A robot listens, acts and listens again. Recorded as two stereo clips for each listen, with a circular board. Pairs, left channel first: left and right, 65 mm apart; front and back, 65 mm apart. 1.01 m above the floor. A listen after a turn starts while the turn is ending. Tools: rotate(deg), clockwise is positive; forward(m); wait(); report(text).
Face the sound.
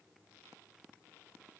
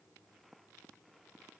wait()
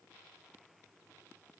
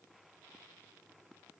wait()
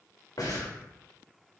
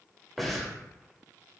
rotate(-90)
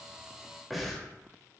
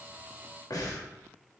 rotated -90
report("Facing the breathing, under 1 m away.")